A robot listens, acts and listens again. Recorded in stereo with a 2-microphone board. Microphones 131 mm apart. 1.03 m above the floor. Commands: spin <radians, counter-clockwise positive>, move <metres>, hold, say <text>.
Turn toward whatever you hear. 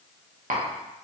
spin -1.22
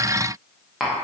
say Facing the tapping, under 1 m away.